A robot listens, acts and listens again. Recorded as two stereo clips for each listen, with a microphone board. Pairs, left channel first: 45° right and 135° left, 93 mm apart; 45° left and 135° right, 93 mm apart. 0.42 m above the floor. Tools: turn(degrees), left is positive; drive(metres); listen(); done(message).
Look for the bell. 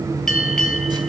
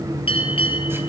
turn(degrees=40)
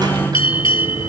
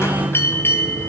turn(degrees=-20)
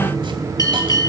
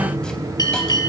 done("Found it: a bell, straight ahead.")